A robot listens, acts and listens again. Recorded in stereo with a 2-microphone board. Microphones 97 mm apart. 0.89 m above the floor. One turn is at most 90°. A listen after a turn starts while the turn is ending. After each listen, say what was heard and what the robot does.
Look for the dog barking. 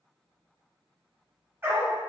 The dog barking: about 25° right or 155° right. Turn 25° right.
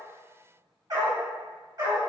So it is at 130° right. Turn 90° right.
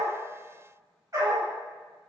The dog barking is now 35° right. Turn 35° right.
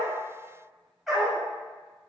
Facing the dog barking.